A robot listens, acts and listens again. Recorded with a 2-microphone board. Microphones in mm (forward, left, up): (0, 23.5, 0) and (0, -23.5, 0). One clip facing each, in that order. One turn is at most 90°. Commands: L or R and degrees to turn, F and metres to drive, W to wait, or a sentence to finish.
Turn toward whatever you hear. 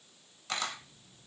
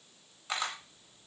R30
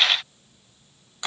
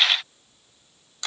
L20
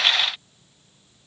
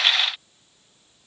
W
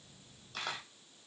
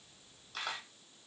Found it: a camera shutter, straight ahead, under 1 m away.